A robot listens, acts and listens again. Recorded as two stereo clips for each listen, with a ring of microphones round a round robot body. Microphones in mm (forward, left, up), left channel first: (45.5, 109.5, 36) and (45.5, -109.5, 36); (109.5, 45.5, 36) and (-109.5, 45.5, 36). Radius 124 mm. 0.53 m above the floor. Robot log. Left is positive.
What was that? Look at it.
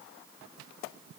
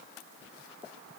cmd idle
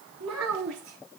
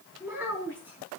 note: The child speaking: 100° right.
cmd yaw -100
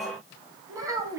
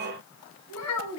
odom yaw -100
note: The child speaking is now 15° right.
cmd yaw -15
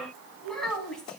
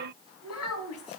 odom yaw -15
end: Found it: a child speaking, straight ahead, 2 to 4 m away.